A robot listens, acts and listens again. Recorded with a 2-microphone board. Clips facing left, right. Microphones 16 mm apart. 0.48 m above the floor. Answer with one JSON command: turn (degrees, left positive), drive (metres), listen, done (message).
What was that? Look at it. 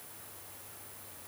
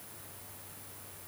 {"listen": true}
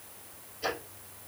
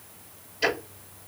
{"turn": -65}
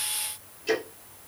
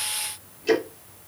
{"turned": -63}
{"done": "Facing the ticking."}